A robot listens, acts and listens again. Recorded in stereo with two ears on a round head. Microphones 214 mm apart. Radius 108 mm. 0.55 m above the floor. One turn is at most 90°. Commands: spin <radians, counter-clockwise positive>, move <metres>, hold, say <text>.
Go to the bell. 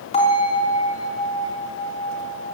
spin 0.44
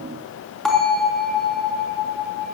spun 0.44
move 1.0
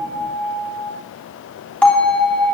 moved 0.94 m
move 1.0
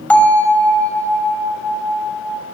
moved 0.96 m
move 1.0
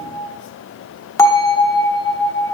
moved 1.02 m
spin 0.26
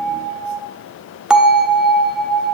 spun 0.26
move 1.0
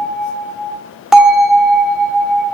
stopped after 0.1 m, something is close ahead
say Arrived at the bell, straight ahead.